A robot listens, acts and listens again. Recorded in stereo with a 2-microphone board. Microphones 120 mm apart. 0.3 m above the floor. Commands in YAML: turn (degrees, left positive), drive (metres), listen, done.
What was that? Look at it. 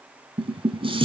turn: -50
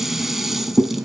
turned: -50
done: "Facing the dishes clattering."